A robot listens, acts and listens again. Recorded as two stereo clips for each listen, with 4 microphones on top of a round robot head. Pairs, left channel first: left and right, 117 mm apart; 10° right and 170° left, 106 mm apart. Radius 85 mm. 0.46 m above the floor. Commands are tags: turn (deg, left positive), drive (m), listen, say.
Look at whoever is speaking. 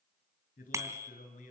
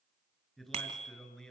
<turn deg="70"/>
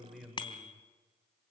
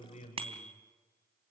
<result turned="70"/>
<say>Found it: a man speaking, straight ahead, over 4 m away.</say>